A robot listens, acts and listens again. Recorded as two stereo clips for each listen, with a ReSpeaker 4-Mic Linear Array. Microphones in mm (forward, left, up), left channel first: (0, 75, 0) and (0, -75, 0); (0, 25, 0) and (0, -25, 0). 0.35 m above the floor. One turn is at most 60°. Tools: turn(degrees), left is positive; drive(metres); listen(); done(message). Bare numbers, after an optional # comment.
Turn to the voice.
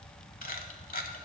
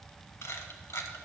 listen()
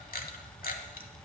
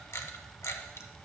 listen()
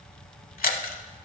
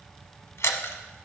done("I can't make out anyone speaking, only a camera shutter.")